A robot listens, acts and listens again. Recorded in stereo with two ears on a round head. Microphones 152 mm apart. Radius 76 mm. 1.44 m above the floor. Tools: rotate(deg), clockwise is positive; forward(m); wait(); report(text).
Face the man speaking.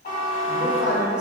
rotate(30)
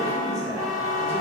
rotate(20)
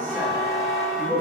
rotate(-30)
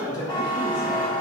rotate(-130)
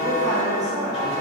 report("Facing the man speaking.")